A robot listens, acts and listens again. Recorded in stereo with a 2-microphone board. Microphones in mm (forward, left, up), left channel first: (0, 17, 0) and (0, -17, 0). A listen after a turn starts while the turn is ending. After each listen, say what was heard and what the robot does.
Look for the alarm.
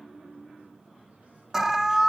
Turn 30° right.
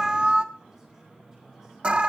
So it is at 140° right. Turn 140° right.
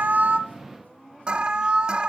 The alarm is now 35° right. Turn 35° right.
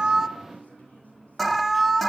Found it: an alarm, straight ahead.